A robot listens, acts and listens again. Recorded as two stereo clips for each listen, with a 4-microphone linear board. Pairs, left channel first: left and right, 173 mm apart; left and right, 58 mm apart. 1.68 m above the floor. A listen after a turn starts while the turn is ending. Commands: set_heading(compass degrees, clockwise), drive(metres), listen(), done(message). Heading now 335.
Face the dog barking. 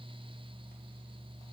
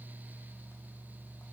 listen()
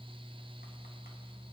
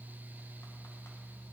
listen()
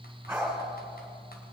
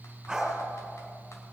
set_heading(5)
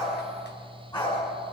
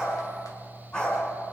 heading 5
set_heading(340)
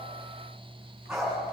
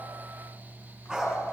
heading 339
done("Facing the dog barking.")